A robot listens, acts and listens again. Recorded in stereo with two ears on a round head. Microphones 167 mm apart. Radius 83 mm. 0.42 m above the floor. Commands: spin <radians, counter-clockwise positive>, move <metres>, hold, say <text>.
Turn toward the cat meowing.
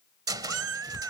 spin -1.57
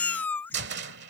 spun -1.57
spin 0.17
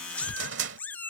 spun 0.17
spin 0.17
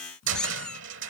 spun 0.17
say Facing the cat meowing.